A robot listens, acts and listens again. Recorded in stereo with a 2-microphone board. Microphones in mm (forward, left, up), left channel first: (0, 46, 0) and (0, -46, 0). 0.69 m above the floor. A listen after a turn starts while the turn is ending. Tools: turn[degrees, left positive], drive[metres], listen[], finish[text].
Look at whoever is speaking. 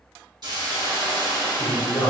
Action: turn[30]
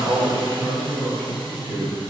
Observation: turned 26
Thought: So it is at 20° right.
Action: turn[-20]
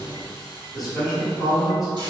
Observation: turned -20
Action: finish[Facing the man speaking.]